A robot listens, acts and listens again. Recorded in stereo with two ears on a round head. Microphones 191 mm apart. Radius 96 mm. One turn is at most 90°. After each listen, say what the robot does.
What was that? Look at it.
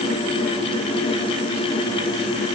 Keep listening.
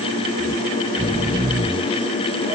Turn 20° right.
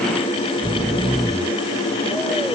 Found it: snoring, straight ahead.